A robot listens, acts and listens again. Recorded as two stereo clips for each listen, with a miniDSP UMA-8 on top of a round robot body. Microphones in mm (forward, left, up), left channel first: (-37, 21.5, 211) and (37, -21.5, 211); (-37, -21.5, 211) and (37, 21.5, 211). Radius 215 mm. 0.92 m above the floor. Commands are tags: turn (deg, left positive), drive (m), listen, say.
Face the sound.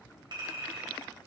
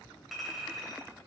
<turn deg="-60"/>
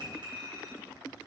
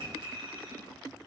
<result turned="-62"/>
<say>Facing the clink, 2 to 4 m away.</say>